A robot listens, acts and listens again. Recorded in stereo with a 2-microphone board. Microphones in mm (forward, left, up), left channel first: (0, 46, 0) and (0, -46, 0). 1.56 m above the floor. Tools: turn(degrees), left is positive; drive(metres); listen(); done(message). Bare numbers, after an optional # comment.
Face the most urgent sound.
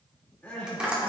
# The crying: about 15° left or 165° left.
turn(15)
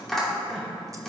listen()
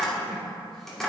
listen()
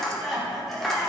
done("Facing the crying.")